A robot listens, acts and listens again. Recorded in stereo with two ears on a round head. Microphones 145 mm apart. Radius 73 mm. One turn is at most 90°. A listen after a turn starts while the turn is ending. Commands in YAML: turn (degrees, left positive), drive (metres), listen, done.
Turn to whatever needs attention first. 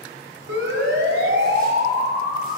turn: -90
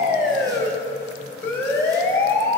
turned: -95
turn: 10
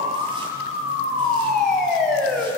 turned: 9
done: "Facing the siren."